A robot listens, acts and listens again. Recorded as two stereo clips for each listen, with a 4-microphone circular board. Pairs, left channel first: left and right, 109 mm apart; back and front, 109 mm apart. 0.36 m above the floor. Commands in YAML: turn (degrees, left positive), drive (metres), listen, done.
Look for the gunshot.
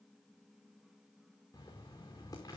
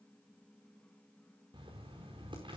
listen: true
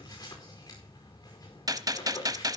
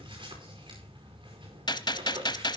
turn: -140
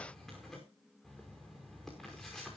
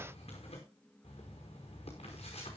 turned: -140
done: "Facing where the gunshot came from. I can't hear it now."